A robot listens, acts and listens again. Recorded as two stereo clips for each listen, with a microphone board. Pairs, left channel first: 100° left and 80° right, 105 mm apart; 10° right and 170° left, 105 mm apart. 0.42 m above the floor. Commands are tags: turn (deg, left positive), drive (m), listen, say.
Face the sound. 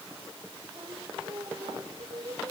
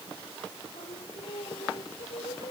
<turn deg="-30"/>
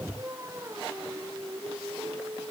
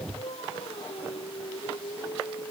<turn deg="-20"/>
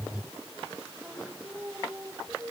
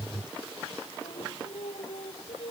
<turn deg="-10"/>
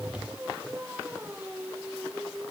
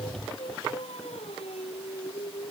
<say>Facing the singing.</say>